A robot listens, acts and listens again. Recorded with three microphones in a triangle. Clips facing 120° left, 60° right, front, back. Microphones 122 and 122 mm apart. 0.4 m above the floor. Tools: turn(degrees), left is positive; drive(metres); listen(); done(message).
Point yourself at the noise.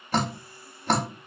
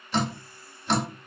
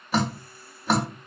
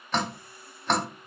turn(degrees=85)
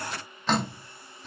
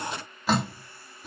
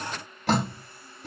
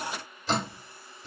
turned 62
turn(degrees=20)
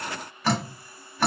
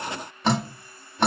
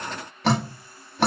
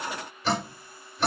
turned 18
done("Found it: dripping, straight ahead, under 1 m away.")